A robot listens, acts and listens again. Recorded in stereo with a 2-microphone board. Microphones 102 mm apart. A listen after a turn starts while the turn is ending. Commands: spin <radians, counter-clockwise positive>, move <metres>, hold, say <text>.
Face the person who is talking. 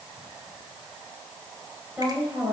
spin -0.26
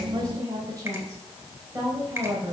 spin -2.62
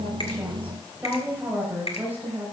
spin -0.26
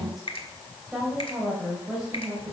say Found it: a woman speaking, straight ahead, 2 to 4 m away.